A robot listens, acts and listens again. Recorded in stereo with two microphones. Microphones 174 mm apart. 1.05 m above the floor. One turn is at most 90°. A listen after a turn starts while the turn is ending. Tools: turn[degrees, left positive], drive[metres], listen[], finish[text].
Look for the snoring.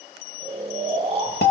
Thought: The snoring: about 40° right or 140° right.
Action: turn[-40]
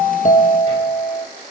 Action: listen[]
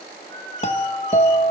Thought: So it is at 95° right.
Action: turn[-90]
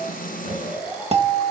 Thought: The snoring is now 10° right.
Action: turn[-10]
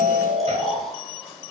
Action: finish[Found it: snoring, straight ahead.]